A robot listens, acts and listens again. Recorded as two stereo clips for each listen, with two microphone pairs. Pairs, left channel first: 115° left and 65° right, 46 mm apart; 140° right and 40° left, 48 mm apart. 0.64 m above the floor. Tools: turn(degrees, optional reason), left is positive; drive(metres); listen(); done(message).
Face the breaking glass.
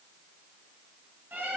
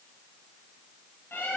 listen()
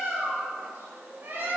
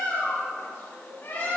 listen()
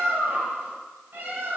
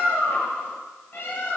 done("I can't make out breaking glass to turn to.")